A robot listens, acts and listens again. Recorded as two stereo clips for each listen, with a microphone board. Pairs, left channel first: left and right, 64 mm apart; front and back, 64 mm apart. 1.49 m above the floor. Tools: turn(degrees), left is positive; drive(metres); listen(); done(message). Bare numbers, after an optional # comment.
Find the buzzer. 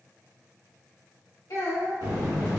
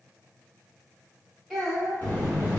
# The buzzer: 65° right.
turn(-65)
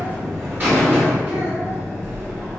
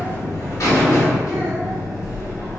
# The buzzer is now 35° right.
turn(-35)
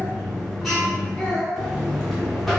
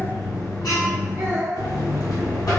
done("Facing the buzzer.")